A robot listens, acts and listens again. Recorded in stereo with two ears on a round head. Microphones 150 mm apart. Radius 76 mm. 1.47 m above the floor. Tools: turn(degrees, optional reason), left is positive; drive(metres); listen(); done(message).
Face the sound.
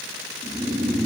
turn(degrees=-20, reason="The snoring: about 20° right or 160° right.")
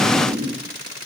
turn(degrees=-140, reason="So it is at 140° right.")
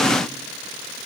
listen()
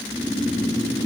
turn(degrees=10, reason="The snoring is now 10° left.")
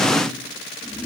done("Facing the snoring, 1 to 2 m away.")